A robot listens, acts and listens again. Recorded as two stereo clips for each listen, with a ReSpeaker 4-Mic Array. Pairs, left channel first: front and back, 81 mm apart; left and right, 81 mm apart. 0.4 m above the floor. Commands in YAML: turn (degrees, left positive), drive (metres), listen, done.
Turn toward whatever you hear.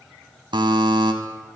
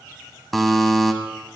turn: 175
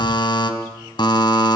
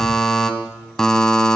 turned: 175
done: "Facing the buzzer, 1 to 2 m away."